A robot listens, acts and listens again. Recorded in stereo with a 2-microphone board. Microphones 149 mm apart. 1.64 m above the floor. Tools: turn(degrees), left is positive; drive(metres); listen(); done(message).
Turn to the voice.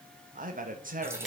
turn(degrees=-65)
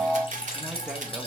listen()
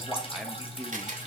done("Facing the man speaking.")